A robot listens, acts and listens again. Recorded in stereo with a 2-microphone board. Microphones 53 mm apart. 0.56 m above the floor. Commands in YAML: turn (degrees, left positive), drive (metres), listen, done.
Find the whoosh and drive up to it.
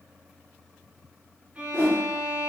turn: 35
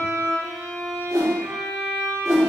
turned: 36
drive: 1.0
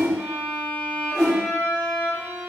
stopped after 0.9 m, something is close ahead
turn: 10
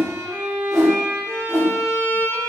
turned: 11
done: "I am next to the whoosh."